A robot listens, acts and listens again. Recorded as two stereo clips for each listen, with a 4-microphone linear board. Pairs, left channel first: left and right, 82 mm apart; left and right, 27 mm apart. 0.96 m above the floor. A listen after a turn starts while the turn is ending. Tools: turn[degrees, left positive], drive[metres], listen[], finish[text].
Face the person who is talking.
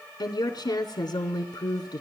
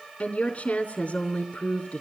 Thought: The woman speaking: about 70° left or 110° left.
Action: turn[70]
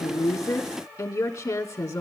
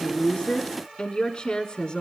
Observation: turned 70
Thought: So it is at 30° left.
Action: turn[30]
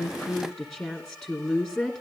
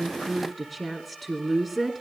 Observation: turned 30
Action: finish[Facing the woman speaking.]